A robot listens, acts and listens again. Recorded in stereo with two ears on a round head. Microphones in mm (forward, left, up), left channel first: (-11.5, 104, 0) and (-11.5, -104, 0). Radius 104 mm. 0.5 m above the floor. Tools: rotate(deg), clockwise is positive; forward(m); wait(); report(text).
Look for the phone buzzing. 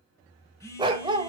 rotate(-30)
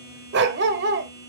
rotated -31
rotate(15)
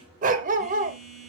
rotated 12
report("Facing the phone buzzing, 1 to 2 m away.")